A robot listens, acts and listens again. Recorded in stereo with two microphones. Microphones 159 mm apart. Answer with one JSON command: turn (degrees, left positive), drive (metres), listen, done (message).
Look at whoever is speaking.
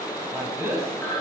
{"turn": -15}
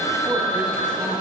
{"listen": true}
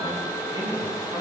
{"listen": true}
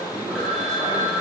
{"done": "I heard a man speaking, but can't make it out now. It was about straight ahead or 150° right."}